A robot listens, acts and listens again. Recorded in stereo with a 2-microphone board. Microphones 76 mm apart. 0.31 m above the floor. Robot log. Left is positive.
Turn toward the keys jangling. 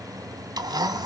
cmd idle
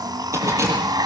note: The keys jangling: about 40° right or 140° right.
cmd yaw -40
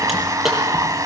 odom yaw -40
cmd idle
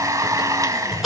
end: Facing the keys jangling, over 4 m away.